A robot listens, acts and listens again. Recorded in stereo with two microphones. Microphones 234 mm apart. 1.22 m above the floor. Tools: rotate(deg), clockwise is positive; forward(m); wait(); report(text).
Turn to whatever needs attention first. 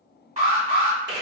rotate(30)
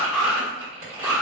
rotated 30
report("Facing the alarm.")